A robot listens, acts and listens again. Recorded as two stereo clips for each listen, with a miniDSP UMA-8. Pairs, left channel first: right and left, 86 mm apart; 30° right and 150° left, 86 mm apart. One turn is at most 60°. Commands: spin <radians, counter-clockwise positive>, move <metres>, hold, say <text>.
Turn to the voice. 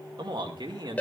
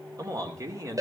spin 1.05
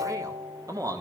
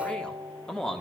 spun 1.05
spin 0.96
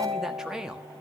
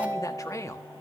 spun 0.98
spin 0.17
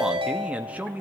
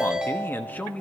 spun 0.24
spin 0.61
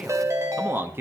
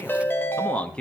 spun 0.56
spin 0.79
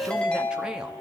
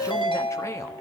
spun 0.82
hold
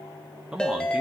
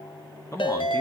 spin 0.17
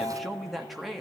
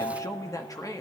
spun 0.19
say Facing the man speaking, 1 to 2 m away.